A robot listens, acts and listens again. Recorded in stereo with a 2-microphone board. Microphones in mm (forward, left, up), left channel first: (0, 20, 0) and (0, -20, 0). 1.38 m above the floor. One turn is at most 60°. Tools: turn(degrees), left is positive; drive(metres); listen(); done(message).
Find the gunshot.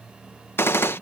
turn(degrees=60)
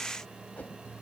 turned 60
listen()
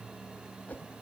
done("I heard a gunshot, but can't make it out now. It was about 10° left or 50° left.")